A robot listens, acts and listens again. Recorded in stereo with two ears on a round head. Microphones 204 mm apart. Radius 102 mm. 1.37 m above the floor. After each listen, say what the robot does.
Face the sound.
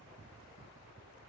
Keep listening.
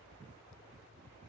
Keep listening.
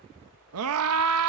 Turn 75° right.
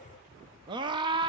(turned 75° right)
Turn 20° right.
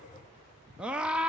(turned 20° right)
Found it: a scream, straight ahead.